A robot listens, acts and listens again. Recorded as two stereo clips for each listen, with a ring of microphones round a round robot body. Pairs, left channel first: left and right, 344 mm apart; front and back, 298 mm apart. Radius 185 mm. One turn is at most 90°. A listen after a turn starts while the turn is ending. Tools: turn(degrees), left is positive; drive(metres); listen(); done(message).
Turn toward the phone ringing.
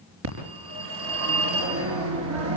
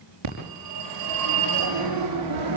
turn(degrees=-90)
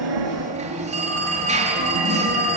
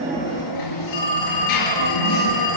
turn(degrees=-20)
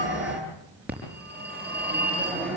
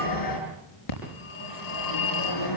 done("Facing the phone ringing, over 4 m away.")